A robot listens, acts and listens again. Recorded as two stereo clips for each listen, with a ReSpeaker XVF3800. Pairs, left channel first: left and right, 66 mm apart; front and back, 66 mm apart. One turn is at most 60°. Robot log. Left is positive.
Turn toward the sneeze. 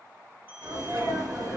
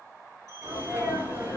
note: The sneeze: 120° right.
cmd yaw -60
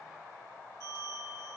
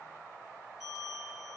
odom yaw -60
note: Nothing new. It was at 60° right.
cmd yaw -60
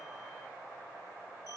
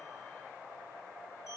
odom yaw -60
end: Facing where the sneeze came from. I can't hear it now.